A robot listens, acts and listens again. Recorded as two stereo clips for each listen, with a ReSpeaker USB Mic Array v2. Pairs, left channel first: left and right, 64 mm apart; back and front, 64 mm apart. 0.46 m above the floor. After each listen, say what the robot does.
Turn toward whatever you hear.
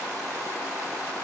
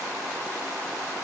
Keep listening.
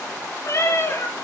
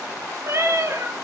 Turn 40° left.
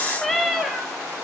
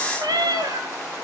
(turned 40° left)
Facing the cat meowing, 1 to 2 m away.